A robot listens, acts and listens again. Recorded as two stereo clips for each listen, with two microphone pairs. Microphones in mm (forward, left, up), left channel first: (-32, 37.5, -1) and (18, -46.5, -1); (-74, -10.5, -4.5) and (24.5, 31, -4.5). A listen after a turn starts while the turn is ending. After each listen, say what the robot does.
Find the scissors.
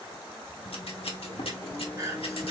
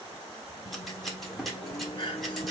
Turn 115° left.
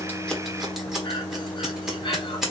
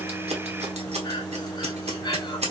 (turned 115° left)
Turn 25° left.
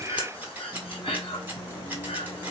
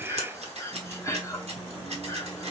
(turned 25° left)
Turn 10° left.
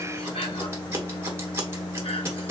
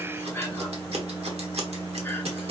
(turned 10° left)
Found it: scissors, straight ahead.